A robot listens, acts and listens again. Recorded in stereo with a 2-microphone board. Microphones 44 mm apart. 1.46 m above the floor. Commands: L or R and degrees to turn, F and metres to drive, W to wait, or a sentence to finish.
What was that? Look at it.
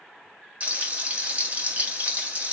R30
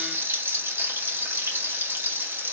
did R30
R120
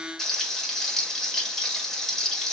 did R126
Facing the frying, 1 to 2 m away.